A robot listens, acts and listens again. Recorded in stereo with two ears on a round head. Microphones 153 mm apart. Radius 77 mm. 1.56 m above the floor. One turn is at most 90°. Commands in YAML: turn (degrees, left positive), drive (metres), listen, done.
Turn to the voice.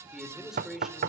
turn: -30
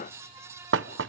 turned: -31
listen: true
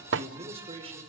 turn: -90
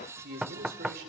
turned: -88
turn: -55
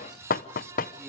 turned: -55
listen: true
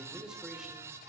done: "Facing the man speaking, over 4 m away."